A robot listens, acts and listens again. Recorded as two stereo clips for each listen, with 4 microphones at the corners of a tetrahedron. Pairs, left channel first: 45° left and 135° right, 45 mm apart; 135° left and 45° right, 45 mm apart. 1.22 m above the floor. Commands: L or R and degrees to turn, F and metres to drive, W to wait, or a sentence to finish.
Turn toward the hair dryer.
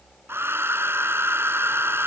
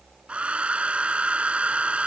R110
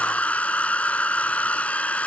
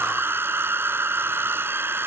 R15
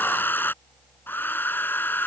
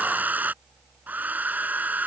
Facing the hair dryer.